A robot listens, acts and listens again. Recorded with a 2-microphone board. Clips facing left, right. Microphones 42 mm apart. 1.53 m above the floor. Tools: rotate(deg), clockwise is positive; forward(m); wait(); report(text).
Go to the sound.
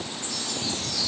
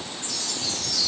rotate(-30)
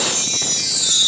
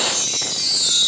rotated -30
rotate(-115)
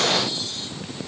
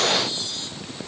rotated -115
wait()
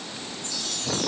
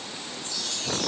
forward(1.0)
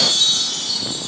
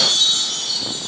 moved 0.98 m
forward(1.0)
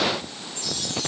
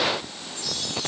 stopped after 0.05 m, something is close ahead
wait()
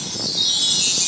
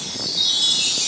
rotate(10)
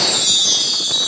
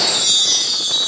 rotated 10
report("I am next to the chime.")